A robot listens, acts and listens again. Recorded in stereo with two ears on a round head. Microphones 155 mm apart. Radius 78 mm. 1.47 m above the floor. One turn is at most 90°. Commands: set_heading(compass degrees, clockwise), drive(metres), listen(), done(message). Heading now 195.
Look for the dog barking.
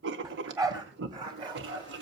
set_heading(225)
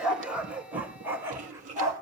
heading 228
set_heading(248)
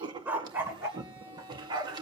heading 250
set_heading(275)
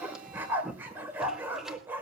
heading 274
set_heading(284)
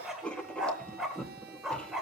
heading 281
done("Found it: a dog barking, straight ahead.")